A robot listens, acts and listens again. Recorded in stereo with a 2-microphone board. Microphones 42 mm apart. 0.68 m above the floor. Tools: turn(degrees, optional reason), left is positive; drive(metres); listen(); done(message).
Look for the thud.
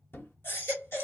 turn(degrees=65, reason="The thud: about 65° left or 115° left.")
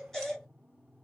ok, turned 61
listen()
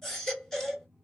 done("I heard a thud, but can't make it out now. It was about 5° left or 50° left.")